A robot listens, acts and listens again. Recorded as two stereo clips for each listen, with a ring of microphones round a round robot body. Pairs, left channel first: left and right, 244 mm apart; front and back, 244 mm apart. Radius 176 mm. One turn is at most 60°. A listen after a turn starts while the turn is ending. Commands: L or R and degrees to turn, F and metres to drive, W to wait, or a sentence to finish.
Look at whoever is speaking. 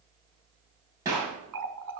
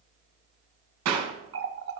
W
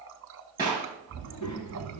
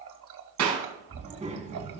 L60
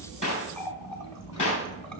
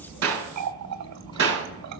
L60
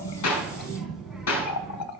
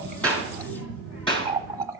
Facing the child speaking, 2 to 4 m away.